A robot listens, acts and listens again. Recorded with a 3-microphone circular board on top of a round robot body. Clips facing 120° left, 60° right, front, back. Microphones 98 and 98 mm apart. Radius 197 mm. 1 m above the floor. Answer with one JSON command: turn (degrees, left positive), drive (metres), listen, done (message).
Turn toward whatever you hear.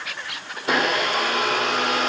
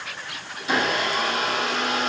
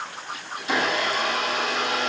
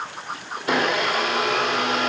{"turn": 150}
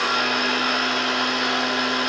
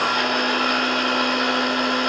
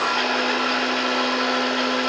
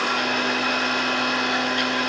{"turn": -20}
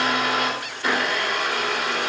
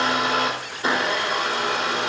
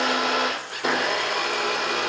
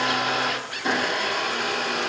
{"done": "Found it: a blender, straight ahead, over 4 m away."}